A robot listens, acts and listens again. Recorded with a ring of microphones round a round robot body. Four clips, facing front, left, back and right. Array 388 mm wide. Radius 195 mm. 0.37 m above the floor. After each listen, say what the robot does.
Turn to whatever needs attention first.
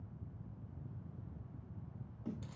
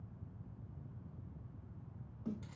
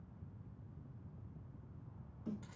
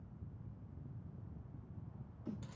Keep listening.
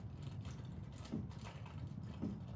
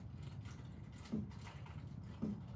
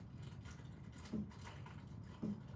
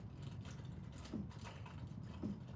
Keep listening.
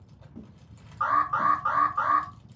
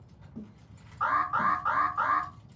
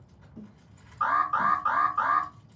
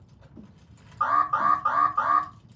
Turn 75° right.
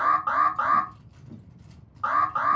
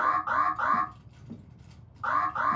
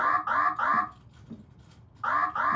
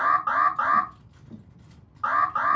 Turn 35° right.
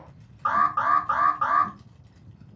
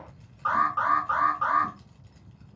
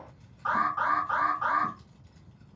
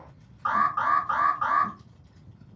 Turn 15° left.
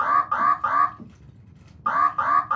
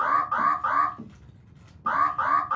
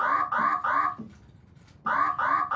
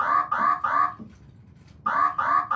Found it: an alarm, straight ahead, 1 to 2 m away.